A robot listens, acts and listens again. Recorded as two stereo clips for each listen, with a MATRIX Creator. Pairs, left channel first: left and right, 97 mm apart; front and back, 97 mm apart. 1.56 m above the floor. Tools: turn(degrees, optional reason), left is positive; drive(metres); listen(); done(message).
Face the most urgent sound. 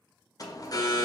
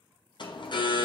turn(degrees=40, reason="The alarm: 40° left.")
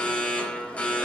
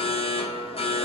turn(degrees=15, reason="The alarm is now 15° left.")
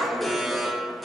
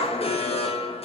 done("Facing the alarm.")